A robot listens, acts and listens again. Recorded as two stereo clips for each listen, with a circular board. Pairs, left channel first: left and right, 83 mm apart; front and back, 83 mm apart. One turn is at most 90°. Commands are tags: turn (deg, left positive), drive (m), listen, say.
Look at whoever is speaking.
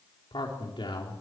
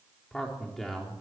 <turn deg="90"/>
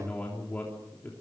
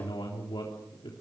<turn deg="25"/>
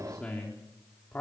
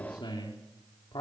<turn deg="20"/>
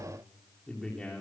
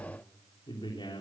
<turn deg="10"/>
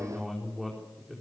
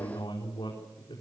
<say>Found it: a man speaking, straight ahead.</say>